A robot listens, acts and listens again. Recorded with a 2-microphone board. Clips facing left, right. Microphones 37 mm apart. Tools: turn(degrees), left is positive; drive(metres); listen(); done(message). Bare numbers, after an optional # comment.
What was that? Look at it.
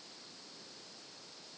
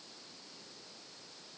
listen()
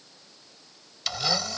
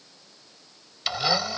# The blender: about 20° right or 160° right.
turn(-20)
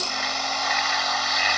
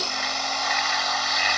done("Facing the blender.")